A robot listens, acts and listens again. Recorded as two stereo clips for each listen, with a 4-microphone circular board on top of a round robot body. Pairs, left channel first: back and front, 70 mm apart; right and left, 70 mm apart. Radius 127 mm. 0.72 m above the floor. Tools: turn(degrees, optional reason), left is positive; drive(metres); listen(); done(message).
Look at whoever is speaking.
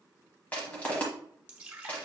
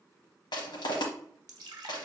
listen()
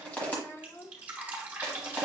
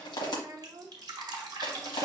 turn(degrees=120, reason="The child speaking: 120° left.")
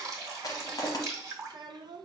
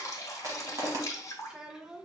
turn(degrees=10, reason="The child speaking is now 10° left.")
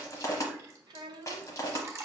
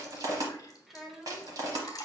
done("Facing the child speaking.")